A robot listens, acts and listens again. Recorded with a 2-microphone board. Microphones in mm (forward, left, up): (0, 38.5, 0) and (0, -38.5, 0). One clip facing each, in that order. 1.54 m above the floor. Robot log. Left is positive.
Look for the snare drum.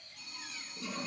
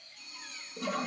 cmd idle
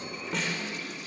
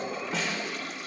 cmd yaw +30
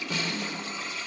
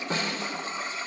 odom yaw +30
note: So it is at 35° right.
cmd yaw -35
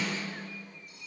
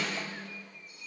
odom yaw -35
end: Found it: a snare drum, straight ahead, 2 to 4 m away.